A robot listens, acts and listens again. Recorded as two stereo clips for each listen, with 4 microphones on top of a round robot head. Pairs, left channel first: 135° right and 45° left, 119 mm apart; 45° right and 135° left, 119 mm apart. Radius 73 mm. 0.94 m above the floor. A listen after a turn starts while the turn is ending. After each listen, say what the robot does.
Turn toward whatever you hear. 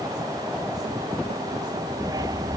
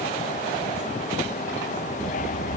Turn 15° right.
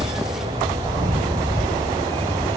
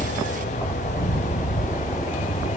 Found it: a dog barking, straight ahead.